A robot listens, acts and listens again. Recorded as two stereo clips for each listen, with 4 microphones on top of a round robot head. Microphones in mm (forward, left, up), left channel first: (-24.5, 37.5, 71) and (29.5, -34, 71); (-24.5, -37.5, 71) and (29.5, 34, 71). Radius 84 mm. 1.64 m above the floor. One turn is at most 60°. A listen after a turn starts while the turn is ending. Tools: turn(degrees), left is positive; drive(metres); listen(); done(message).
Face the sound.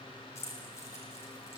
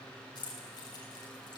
turn(degrees=-60)
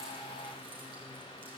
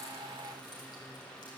turn(degrees=-60)
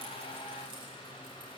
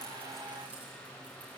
turn(degrees=-50)
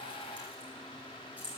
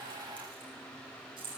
turn(degrees=20)
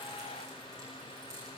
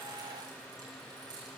listen()
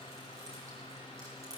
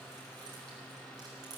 listen()
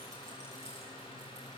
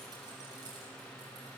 done("I heard keys jangling from this way, but can't make it out now.")